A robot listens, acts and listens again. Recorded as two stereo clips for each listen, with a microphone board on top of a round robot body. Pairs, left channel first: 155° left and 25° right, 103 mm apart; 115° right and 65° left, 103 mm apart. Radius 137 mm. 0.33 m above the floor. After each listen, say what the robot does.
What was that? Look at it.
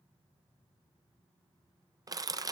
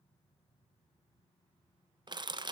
Turn 30° left.
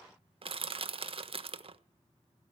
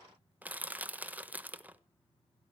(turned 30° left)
Found it: crushing, straight ahead, 1 to 2 m away.